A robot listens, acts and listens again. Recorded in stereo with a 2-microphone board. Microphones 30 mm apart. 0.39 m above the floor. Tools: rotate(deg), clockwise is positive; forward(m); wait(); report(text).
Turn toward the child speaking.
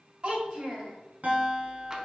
rotate(35)
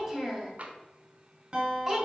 report("Facing the child speaking.")